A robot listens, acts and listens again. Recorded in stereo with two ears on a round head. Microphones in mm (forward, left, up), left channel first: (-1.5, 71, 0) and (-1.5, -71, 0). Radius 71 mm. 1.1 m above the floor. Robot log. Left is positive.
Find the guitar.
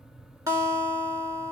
note: The guitar: about 20° right or 160° right.
cmd yaw -20
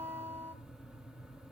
note: So it is at 135° right.
cmd yaw -135
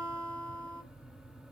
end: Facing the guitar.